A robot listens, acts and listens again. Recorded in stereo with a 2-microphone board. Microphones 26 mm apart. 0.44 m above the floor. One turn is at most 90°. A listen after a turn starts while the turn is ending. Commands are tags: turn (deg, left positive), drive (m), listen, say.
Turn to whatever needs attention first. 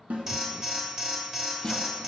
<turn deg="-30"/>
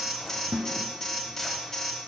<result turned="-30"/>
<turn deg="15"/>
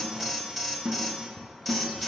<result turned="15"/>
<say>Found it: an alarm, straight ahead.</say>